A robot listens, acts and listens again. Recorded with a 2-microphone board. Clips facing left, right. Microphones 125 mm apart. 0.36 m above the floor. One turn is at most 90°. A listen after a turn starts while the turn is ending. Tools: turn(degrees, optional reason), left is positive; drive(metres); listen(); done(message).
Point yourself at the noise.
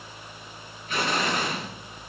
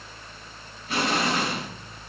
turn(degrees=-35, reason="The explosion: about 35° right or 145° right.")
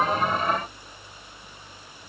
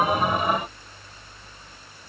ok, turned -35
listen()
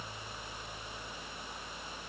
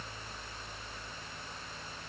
done("I heard an explosion, but can't make it out now. It was about straight ahead or 110° right.")